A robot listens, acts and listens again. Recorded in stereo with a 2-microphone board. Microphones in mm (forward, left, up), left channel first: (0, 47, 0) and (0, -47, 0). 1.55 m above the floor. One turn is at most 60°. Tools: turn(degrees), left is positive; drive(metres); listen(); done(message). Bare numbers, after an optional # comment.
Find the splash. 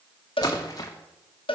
# The splash: about 40° left or 140° left.
turn(40)
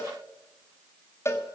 listen()
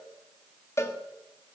done("I heard a splash, but can't make it out now. It was about straight ahead or 100° left.")